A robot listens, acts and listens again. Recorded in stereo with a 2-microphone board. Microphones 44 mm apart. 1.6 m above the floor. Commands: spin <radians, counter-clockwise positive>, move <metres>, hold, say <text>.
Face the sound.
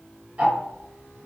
spin -0.52
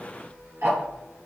spin -2.01
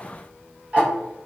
spin -0.52
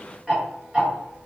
spin -0.26
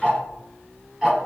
say Facing the ticking, 1 to 2 m away.